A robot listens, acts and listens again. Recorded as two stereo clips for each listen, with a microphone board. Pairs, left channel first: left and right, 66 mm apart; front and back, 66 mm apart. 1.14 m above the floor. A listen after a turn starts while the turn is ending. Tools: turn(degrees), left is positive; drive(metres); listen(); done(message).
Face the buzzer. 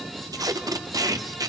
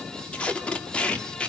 listen()
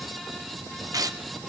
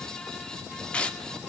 listen()
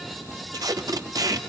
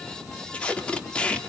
done("I can't make out a buzzer, only tape being pulled.")